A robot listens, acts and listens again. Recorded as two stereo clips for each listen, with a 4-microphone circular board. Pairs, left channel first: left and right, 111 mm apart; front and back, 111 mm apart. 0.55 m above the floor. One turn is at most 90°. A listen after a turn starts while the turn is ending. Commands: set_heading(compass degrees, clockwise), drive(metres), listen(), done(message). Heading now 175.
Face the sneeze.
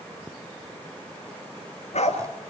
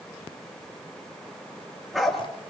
listen()
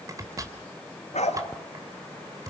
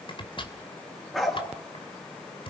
listen()
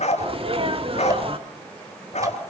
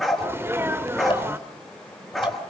set_heading(265)
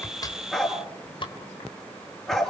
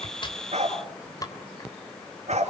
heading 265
set_heading(290)
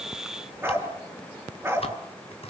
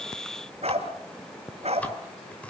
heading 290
done("Facing where the sneeze came from. I can't hear it now.")